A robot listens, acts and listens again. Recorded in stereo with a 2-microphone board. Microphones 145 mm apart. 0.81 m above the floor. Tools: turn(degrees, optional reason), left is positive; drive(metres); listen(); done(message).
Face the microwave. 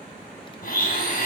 listen()
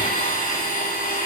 listen()
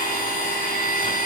done("I can't make out a microwave to turn to.")